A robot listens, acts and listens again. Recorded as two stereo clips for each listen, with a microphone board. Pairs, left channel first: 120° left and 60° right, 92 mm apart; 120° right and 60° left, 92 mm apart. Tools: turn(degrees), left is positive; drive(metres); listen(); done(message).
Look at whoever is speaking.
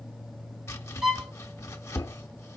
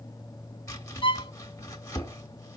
listen()
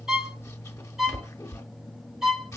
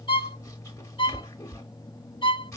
listen()
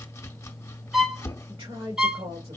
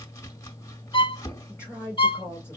turn(degrees=-60)
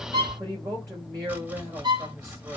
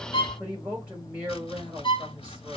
turn(degrees=-15)
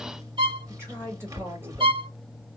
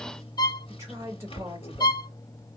done("Facing the woman speaking.")